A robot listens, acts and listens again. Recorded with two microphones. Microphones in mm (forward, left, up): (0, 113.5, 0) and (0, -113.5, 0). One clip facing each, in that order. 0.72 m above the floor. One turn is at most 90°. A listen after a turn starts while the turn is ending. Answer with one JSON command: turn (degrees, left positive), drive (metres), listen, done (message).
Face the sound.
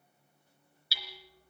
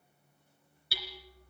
{"turn": -55}
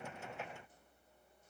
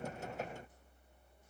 {"listen": true}
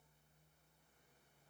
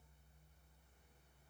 {"listen": true}
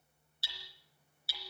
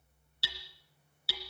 {"turn": -70}
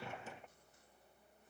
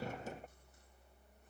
{"listen": true}
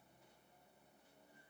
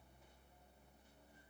{"listen": true}
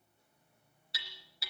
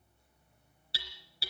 {"turn": -30}
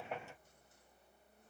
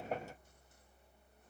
{"listen": true}
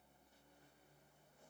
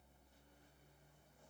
{"listen": true}
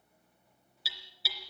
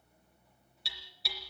{"done": "Found it: hammering, straight ahead."}